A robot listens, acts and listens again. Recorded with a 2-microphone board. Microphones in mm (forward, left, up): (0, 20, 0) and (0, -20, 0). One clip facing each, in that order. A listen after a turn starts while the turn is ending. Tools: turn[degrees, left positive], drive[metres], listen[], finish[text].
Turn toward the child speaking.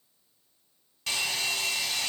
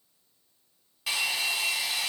Action: listen[]
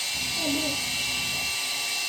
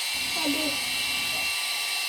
Thought: The child speaking: about 65° right or 115° right.
Action: turn[-65]
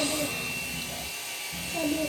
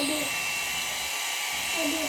Thought: So it is at 25° right.
Action: turn[-25]
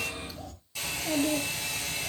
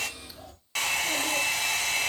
Thought: The child speaking is now 10° right.
Action: turn[-10]
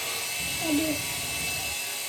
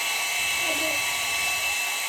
Action: finish[Found it: a child speaking, straight ahead, 2 to 4 m away.]